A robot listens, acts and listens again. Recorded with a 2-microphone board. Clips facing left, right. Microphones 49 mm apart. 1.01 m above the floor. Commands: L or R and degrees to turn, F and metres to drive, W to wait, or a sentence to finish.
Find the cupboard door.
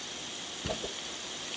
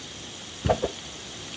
R20
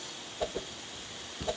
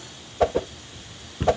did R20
R140
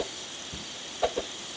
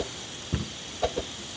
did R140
R45
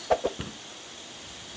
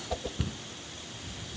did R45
L15
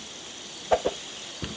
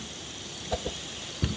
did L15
Found it: a cupboard door, straight ahead.